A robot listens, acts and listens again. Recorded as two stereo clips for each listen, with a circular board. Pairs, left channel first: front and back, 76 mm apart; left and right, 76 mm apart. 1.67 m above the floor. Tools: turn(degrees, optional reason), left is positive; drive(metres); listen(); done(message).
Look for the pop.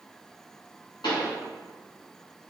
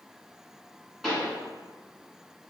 done("Facing the pop, 1 to 2 m away.")